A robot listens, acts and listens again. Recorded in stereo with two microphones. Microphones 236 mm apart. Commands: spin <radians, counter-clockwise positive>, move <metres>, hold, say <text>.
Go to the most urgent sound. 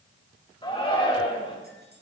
spin 0.35
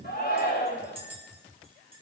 spin 2.36
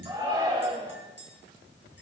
spin -0.35
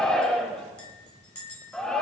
move 1.0
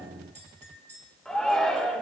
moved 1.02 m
move 1.0
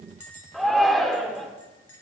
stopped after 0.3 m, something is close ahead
say I am next to the shout.